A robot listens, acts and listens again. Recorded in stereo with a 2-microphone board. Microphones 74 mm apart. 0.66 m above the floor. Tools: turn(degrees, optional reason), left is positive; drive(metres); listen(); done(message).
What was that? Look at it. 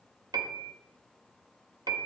turn(degrees=-65, reason="The piano: about 65° right or 115° right.")
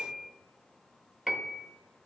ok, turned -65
done("Found it: a piano, straight ahead, under 1 m away.")